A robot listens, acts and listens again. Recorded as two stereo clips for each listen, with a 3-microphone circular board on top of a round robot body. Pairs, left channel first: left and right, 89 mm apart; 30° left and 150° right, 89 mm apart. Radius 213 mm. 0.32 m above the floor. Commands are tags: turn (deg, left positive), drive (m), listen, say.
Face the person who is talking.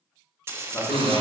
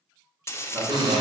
<turn deg="165"/>
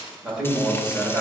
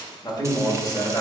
<turn deg="-10"/>
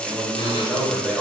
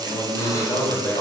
<say>Facing the man speaking.</say>